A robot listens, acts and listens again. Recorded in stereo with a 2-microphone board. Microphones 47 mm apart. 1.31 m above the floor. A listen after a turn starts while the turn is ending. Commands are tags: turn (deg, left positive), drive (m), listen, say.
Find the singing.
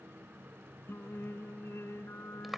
<turn deg="65"/>
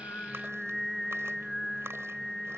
<turn deg="10"/>
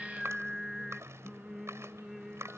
<say>Found it: singing, straight ahead.</say>